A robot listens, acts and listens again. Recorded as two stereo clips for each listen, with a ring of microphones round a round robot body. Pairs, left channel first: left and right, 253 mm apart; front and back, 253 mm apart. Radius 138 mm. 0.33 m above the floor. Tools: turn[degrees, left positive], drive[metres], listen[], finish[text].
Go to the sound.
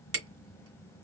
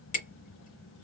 Thought: The hammering: 60° right.
Action: turn[-60]
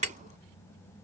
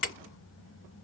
Thought: The hammering is now 30° right.
Action: turn[-30]
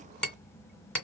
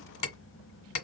Action: drive[1.0]
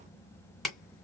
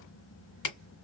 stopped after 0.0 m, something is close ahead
Action: finish[Blocked. The hammering is further on, straight ahead.]